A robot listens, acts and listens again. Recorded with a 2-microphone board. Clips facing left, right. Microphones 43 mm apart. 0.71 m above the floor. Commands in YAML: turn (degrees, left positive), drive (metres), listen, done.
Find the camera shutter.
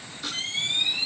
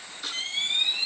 turn: -30
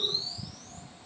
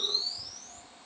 turn: 25
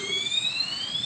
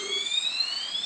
turn: 15
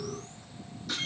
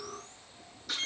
done: "Found it: a camera shutter, straight ahead."